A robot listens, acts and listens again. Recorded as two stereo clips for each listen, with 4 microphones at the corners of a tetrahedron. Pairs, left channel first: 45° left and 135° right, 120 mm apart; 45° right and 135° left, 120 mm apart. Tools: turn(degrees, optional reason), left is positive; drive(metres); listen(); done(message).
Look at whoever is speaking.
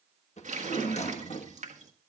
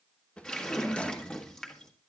listen()
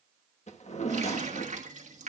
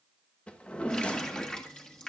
listen()
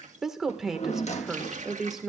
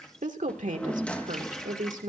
turn(degrees=140, reason="The woman speaking: 140° left.")
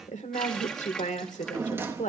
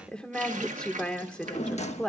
turn(degrees=35, reason="The woman speaking is now 35° left.")
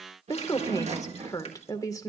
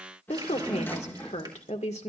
turn(degrees=-15, reason="The woman speaking is now 15° right.")
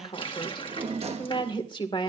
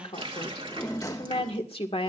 done("Facing the woman speaking.")